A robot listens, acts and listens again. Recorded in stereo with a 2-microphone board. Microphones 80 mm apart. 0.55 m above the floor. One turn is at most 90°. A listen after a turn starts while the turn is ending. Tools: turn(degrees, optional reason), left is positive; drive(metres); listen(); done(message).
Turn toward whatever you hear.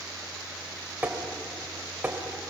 turn(degrees=-20, reason="The tapping: about 20° right or 160° right.")
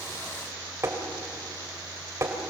turn(degrees=-90, reason="So it is at 140° right.")
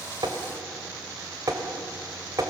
turn(degrees=-50, reason="The tapping is now 50° right.")
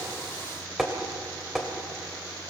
done("Found it: tapping, straight ahead, 2 to 4 m away.")